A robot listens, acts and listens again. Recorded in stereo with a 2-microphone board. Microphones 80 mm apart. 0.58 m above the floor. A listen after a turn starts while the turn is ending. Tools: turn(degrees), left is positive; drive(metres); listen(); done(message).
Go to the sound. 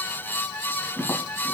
turn(degrees=20)
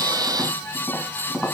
drive(metres=1.0)
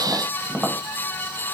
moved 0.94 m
turn(degrees=-10)
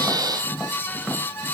drive(metres=1.0)
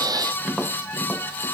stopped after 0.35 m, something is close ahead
done("I am next to the tapping.")